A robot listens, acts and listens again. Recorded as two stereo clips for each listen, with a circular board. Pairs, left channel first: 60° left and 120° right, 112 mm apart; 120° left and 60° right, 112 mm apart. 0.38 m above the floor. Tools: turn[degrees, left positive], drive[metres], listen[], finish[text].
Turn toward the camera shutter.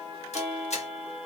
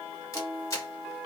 Thought: The camera shutter: 60° left.
Action: turn[60]
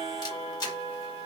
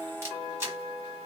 Action: finish[Facing the camera shutter, 1 to 2 m away.]